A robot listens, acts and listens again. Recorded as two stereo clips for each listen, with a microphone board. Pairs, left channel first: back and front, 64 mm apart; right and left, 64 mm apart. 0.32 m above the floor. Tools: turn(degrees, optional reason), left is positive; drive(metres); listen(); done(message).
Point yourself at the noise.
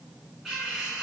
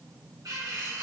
turn(degrees=80, reason="The cutlery clinking: 80° left.")
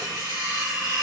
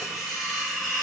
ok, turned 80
done("Facing the cutlery clinking, 1 to 2 m away.")